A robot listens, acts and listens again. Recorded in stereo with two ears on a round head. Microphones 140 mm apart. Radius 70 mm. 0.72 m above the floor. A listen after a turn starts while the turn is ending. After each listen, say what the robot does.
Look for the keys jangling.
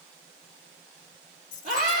Turn 55° left.
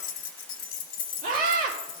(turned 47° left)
Turn 70° left.
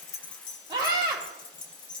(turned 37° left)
Turn 30° left.
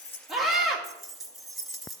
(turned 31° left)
Found it: keys jangling, straight ahead.